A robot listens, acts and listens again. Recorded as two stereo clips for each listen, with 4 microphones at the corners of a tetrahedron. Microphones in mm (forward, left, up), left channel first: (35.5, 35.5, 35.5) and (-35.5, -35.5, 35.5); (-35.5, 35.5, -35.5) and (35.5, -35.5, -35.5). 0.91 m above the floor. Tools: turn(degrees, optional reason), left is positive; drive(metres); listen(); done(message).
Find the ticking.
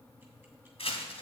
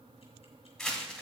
listen()
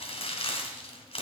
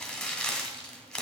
listen()
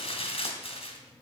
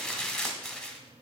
done("I can't make out ticking to turn to.")